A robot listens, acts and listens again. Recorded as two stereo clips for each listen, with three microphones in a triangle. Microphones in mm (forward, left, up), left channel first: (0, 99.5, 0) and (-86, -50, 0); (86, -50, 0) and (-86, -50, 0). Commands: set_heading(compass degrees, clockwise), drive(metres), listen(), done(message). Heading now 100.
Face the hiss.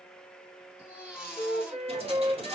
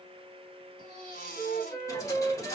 set_heading(170)
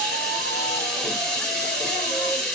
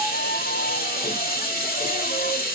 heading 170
set_heading(195)
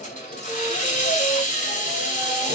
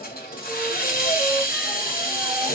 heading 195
set_heading(175)
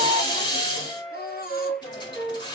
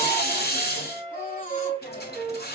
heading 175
done("Found it: a hiss, straight ahead.")